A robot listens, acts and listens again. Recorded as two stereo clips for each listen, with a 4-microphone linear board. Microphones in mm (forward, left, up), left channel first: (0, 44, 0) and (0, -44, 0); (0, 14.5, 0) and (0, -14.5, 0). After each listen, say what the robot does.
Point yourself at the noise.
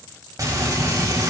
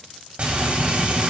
Turn 40° right.
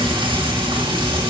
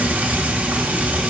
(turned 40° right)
Turn 100° right.
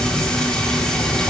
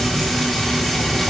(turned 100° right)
Found it: frying, straight ahead, 2 to 4 m away.